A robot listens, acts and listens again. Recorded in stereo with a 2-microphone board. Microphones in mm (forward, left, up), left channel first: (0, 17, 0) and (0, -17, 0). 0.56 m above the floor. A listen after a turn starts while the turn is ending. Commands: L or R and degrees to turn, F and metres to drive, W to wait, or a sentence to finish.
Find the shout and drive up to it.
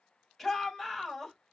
L30
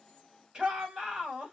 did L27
R25
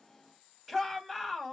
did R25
F1.0
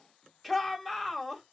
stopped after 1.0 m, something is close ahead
Arrived at the shout, straight ahead.